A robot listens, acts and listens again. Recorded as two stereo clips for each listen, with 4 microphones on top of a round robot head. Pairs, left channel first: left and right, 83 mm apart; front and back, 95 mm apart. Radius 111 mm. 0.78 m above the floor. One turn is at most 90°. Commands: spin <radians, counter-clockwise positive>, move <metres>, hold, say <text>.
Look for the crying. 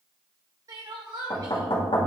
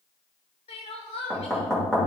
spin -0.61
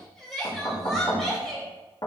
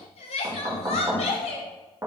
say Found it: crying, straight ahead, under 1 m away.